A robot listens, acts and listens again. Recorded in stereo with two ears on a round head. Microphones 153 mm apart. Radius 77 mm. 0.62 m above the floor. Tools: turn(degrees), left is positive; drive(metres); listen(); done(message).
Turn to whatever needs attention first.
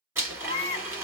turn(degrees=35)
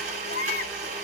turn(degrees=105)
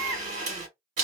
turn(degrees=25)
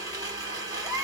done("Facing the baby crying, 1 to 2 m away.")